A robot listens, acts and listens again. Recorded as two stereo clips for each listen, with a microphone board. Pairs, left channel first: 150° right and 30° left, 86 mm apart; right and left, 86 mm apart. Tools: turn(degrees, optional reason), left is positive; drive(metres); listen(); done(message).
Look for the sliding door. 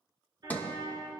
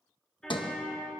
turn(degrees=-80, reason="The sliding door: 80° right.")
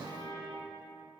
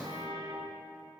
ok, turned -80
done("Found it: a sliding door, straight ahead.")